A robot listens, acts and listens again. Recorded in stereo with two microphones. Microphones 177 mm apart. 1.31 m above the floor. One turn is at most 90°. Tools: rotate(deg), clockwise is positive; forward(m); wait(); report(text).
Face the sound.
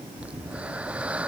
rotate(30)
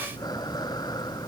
rotate(-25)
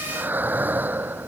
rotate(10)
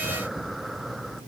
report("Facing the breathing.")